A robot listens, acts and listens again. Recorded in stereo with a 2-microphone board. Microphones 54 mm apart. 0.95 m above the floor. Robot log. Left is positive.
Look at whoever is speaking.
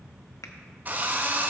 cmd idle
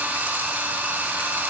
cmd idle
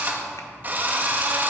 end: I can't make out anyone speaking to turn to.